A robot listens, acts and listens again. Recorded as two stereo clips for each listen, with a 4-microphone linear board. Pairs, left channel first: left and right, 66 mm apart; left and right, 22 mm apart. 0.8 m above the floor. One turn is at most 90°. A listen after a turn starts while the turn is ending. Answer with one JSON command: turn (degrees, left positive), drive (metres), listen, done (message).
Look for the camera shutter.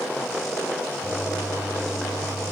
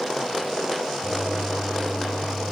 {"listen": true}
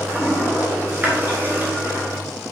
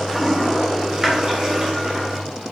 {"listen": true}
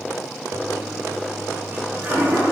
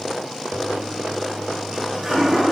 {"done": "I can't make out a camera shutter to turn to."}